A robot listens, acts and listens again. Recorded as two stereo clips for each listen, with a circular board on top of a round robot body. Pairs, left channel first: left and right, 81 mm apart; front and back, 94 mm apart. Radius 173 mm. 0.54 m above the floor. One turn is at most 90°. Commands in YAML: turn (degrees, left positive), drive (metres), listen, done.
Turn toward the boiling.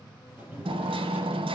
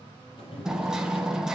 turn: -20
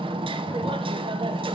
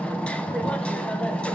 listen: true
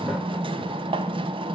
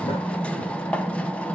done: "Found it: boiling, straight ahead."